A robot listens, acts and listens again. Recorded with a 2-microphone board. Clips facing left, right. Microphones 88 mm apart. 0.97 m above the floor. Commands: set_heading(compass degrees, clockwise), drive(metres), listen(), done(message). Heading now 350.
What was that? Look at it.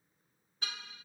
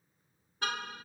set_heading(45)
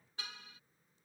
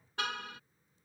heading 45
set_heading(110)
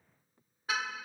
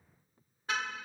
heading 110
done("Facing the car horn.")